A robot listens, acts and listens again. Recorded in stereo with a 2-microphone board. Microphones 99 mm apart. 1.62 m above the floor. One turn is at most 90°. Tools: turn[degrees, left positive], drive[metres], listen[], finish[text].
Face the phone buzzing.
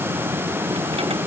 Action: listen[]
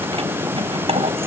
Action: listen[]
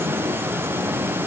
Action: finish[I can't make out a phone buzzing to turn to.]